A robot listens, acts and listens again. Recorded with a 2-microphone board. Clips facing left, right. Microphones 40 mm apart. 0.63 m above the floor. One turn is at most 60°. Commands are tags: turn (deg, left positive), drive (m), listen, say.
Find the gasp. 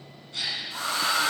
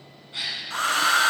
<turn deg="-20"/>
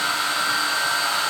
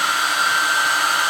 <listen/>
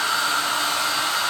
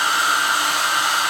<say>I heard a gasp, but can't make it out now. It was about straight ahead or 140° right.</say>